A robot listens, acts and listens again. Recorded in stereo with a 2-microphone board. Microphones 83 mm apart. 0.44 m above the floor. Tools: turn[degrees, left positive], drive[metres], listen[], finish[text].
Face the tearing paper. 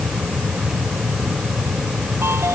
Action: listen[]
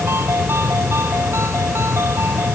Action: listen[]
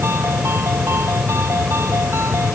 Action: finish[I can't make out tearing paper to turn to.]